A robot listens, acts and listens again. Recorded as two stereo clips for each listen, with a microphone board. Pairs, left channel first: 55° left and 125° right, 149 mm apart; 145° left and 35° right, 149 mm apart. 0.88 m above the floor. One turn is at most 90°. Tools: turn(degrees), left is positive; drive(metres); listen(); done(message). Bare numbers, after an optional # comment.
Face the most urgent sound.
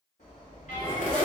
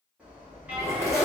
# The alarm: 45° left.
turn(45)
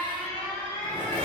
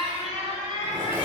# The alarm is now 10° left.
turn(10)
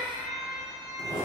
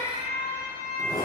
done("Facing the alarm, 1 to 2 m away.")